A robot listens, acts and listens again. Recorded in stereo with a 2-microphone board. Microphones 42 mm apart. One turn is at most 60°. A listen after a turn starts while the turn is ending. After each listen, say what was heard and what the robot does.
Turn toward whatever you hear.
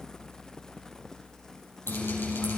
Turn 60° left.
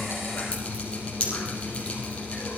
So it is at 25° left. Turn 25° left.
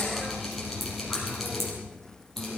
Found it: dripping, straight ahead.